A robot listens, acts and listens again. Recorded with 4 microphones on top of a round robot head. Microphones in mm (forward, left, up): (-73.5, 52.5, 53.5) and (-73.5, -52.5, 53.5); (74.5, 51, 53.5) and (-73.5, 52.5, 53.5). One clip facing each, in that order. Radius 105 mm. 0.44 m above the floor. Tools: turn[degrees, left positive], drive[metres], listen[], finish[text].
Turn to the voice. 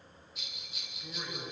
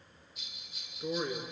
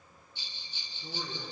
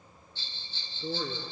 Thought: The man speaking: 150° right.
Action: turn[-150]
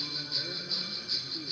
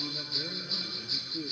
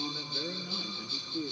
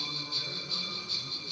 Thought: The man speaking is now 45° right.
Action: turn[-45]
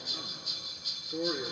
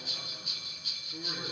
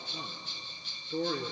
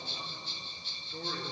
Thought: The man speaking is now 15° left.
Action: turn[15]
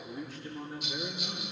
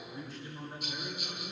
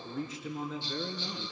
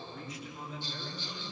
Action: finish[Found it: a man speaking, straight ahead, over 4 m away.]